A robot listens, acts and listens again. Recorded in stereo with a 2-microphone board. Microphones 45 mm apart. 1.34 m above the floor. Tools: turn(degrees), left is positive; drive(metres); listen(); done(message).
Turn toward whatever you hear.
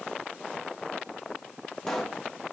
turn(degrees=30)
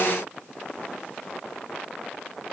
listen()
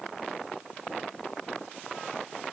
done("I heard a pop, but can't make it out now. It was about 25° right or 145° left.")